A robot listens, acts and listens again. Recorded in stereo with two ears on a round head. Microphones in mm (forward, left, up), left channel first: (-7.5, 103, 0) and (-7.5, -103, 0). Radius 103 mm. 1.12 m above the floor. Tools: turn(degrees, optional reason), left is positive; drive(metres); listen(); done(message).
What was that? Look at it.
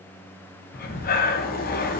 turn(degrees=40, reason="The breathing: about 40° left or 140° left.")
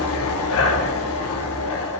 turn(degrees=100, reason="So it is at 100° left.")
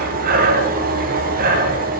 turn(degrees=-40, reason="The breathing is now 40° right.")
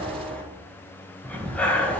done("Facing the breathing.")